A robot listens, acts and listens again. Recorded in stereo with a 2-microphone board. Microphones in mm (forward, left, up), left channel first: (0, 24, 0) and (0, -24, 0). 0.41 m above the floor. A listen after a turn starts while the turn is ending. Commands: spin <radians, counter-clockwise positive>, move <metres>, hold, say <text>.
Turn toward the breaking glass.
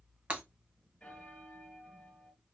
spin -0.61
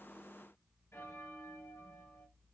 hold
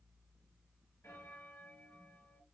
say I heard breaking glass, but can't make it out now. It was about straight ahead or 110° right.